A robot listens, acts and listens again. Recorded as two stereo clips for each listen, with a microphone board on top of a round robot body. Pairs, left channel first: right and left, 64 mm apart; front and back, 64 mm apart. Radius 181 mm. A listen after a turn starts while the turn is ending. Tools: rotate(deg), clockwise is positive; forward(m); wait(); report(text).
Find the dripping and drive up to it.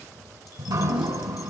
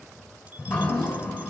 rotate(-80)
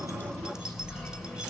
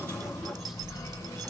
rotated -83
forward(1.0)
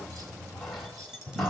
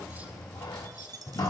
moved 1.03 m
forward(1.0)
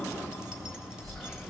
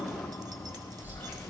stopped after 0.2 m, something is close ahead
report("I am next to the dripping.")